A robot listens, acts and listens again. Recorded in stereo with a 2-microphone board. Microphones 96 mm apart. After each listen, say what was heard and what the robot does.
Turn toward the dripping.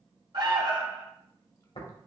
Keep listening.
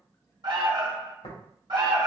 Keep listening.
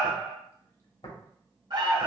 I can't make out dripping to turn to.